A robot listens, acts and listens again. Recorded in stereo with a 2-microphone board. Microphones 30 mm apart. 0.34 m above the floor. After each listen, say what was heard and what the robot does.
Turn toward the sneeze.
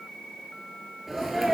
Turn 30° right.
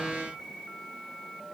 Keep listening.
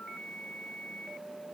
I heard a sneeze, but can't make it out now. It was about 20° left or 140° right.